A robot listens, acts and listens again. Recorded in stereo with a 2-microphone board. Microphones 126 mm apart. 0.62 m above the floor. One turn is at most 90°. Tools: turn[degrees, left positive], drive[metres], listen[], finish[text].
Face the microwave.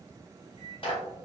Thought: The microwave: about 40° right or 140° right.
Action: turn[-40]
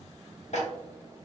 Action: listen[]
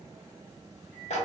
Action: finish[Facing the microwave, 1 to 2 m away.]